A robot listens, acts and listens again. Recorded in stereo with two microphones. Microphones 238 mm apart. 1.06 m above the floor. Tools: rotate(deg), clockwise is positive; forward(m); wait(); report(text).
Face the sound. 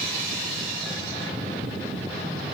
wait()
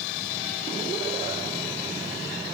wait()
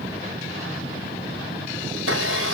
rotate(90)
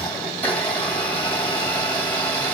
rotate(-10)
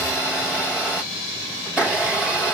report("Found it: a blender, straight ahead.")